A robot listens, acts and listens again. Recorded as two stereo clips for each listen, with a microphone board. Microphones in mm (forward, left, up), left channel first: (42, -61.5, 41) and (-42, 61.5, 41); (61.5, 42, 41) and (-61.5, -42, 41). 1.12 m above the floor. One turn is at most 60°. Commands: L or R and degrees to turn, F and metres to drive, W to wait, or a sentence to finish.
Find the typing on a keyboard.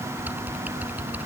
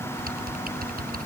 R60
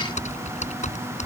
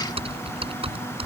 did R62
R60
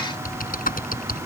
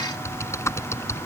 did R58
R35
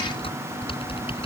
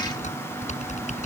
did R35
Facing the typing on a keyboard.